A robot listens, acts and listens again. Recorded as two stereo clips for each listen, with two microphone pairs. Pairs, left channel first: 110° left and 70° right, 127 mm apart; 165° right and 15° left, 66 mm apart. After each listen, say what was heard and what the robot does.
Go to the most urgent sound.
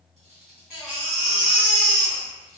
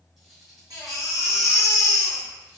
The baby crying: 10° left. Turn 10° left.
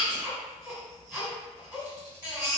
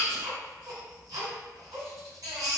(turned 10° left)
Drive 1.0 m forward.
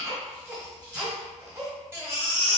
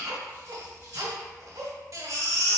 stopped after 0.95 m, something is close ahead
Arrived at the baby crying, straight ahead.